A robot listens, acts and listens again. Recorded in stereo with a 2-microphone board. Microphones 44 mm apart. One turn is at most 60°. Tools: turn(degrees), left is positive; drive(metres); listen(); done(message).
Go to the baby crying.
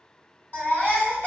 turn(degrees=50)
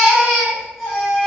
drive(metres=1.0)
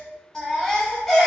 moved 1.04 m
turn(degrees=15)
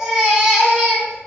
drive(metres=1.0)
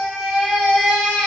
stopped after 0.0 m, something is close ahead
done("Arrived at the baby crying, straight ahead.")